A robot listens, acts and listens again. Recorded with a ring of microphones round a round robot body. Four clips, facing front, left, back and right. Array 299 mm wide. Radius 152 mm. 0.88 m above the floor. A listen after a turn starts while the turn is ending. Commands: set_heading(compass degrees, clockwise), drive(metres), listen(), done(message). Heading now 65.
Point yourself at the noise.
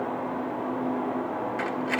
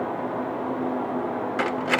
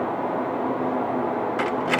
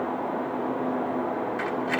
set_heading(305)
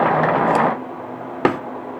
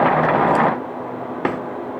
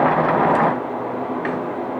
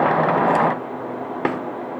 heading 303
done("Facing the cutlery clinking.")